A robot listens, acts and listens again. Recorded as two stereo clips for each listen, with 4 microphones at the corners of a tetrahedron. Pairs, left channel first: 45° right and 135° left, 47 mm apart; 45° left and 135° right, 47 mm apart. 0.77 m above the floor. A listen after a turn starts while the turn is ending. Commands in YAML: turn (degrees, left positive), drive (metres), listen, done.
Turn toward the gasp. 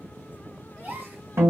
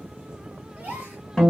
turn: 165
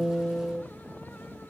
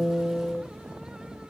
done: "Facing where the gasp came from. I can't hear it now."